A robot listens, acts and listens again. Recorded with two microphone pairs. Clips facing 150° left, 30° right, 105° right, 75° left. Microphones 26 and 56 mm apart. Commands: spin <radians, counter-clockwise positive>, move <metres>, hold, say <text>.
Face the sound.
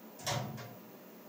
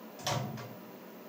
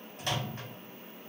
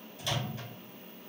spin -1.40
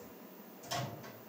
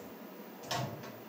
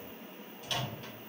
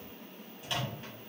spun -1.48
say Found it: a microwave, straight ahead, 1 to 2 m away.